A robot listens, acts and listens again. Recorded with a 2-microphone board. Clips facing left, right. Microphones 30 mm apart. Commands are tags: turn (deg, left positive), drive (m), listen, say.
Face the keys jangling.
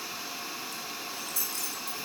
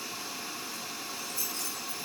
<turn deg="90"/>
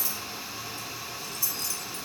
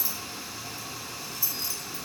<turn deg="-10"/>
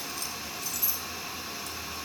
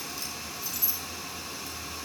<say>Found it: keys jangling, straight ahead.</say>